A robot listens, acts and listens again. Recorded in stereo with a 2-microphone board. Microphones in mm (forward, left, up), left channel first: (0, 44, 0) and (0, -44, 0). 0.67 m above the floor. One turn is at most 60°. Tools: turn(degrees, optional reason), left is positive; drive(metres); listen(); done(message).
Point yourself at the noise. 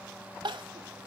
turn(degrees=-60, reason="The crying: about 65° right or 115° right.")
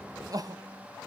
turn(degrees=-50, reason="So it is at 50° right.")
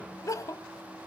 turn(degrees=40, reason="The crying is now 40° left.")
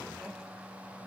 listen()
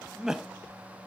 done("Found it: crying, straight ahead.")